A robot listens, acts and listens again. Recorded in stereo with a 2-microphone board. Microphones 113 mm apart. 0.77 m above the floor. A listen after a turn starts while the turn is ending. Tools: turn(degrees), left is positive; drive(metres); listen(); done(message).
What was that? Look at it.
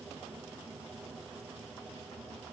listen()
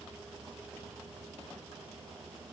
listen()
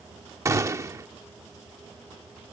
turn(degrees=-25)
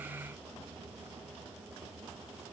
listen()
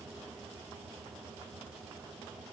done("I heard a gunshot, but can't make it out now. It was about straight ahead or 130° right.")